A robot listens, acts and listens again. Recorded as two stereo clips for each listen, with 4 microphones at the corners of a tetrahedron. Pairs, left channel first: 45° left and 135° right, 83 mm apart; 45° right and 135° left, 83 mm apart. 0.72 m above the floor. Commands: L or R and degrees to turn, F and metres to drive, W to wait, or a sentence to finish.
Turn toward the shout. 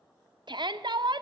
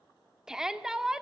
R145
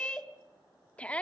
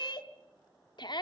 R30
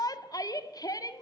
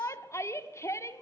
Facing the shout.